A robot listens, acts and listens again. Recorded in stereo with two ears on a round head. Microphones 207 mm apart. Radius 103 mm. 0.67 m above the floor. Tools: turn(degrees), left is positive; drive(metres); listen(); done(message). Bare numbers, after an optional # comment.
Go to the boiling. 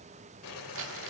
# The boiling: about 60° left or 120° left.
turn(60)
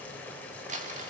drive(1.0)
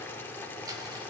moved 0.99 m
# The boiling is now 10° left.
turn(10)
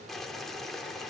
drive(1.0)
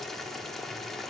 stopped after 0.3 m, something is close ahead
done("I am next to the boiling.")